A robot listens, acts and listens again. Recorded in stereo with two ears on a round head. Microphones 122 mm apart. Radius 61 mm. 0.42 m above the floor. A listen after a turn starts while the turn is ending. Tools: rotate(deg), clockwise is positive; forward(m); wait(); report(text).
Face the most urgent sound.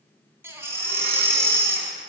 rotate(20)
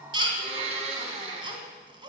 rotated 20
rotate(140)
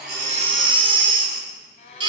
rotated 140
rotate(40)
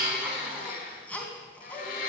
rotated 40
rotate(-10)
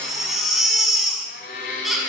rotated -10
report("Found it: a baby crying, straight ahead, 2 to 4 m away.")